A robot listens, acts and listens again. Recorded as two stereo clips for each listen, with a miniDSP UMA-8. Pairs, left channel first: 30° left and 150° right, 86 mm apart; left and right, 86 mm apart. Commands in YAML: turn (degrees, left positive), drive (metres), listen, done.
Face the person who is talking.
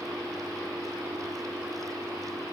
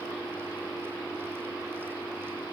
listen: true
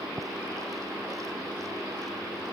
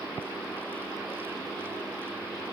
listen: true
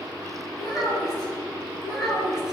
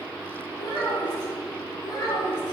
turn: 120
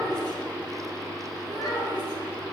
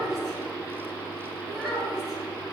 done: "Found it: a child speaking, straight ahead."